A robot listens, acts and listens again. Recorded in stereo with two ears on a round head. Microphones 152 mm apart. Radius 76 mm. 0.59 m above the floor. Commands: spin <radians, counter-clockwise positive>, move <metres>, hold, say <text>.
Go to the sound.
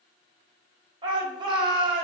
spin -0.44
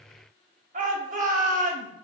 spin -2.27
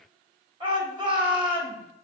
spin -0.52
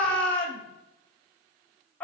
move 1.0
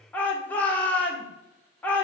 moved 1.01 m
spin 0.17
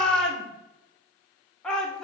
move 1.0
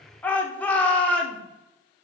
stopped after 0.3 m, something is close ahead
spin 0.17
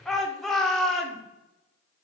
say Arrived at the shout, straight ahead.